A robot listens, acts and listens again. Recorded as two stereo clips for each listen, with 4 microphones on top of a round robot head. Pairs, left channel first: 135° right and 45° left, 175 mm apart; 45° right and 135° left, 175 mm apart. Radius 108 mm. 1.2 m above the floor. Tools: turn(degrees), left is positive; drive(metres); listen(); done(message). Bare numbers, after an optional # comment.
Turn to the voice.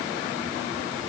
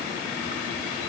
listen()
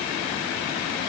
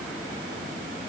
listen()
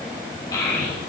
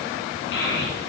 # The child speaking: 65° right.
turn(-65)
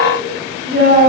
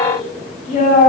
done("Found it: a child speaking, straight ahead.")